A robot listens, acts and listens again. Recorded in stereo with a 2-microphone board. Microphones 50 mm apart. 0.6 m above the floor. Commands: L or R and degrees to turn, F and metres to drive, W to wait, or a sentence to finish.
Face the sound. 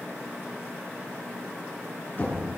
L40
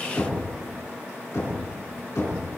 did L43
L100
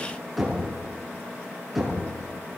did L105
Found it: knocking, straight ahead, over 4 m away.